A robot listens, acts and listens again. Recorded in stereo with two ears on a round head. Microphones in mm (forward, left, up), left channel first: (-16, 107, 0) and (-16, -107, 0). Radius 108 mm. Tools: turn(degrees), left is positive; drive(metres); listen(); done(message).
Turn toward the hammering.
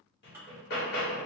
turn(degrees=45)
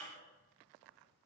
listen()
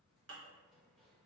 listen()
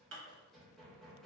done("Found it: hammering, straight ahead, 1 to 2 m away.")